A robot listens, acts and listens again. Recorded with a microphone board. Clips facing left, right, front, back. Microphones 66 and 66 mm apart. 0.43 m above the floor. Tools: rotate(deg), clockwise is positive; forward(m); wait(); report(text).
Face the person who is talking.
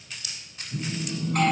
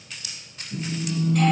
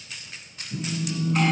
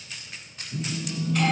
wait()
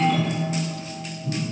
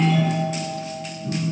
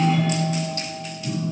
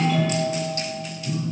wait()
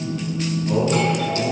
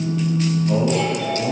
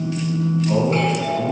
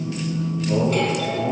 report("Found it: a man speaking, straight ahead.")